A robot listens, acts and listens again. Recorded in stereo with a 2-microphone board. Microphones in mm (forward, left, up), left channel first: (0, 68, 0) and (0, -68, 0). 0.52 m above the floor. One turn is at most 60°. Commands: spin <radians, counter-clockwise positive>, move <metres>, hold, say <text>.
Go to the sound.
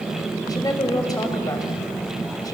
spin 0.52
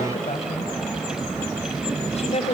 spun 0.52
spin 1.05
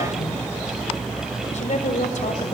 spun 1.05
spin 1.05
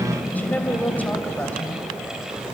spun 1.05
spin 0.26
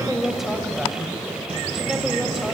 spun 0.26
move 1.0
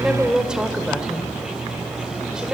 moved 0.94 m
move 1.0
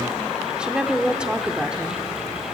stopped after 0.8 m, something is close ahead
spin -0.17
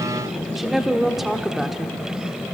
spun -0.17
say Arrived at the woman speaking, straight ahead.